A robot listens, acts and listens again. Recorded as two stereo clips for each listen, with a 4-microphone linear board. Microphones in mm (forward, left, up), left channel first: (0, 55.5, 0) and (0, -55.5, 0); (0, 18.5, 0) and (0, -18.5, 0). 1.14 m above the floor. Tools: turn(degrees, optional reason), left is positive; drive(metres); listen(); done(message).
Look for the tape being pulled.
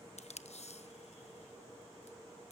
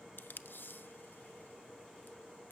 turn(degrees=90)
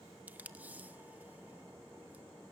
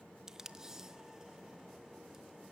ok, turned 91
turn(degrees=-15, reason="So it is at 15° right.")
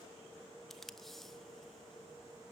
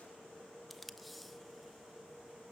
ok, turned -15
done("Found it: tape being pulled, straight ahead, under 1 m away.")